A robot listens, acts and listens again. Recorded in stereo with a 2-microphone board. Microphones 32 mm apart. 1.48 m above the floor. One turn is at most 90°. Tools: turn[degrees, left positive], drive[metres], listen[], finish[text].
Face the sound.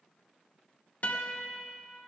Thought: The guitar: about 50° left or 130° left.
Action: turn[50]
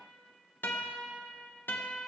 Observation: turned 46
Thought: So it is at 85° left.
Action: turn[85]
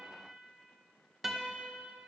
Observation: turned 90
Action: finish[Facing the guitar, 1 to 2 m away.]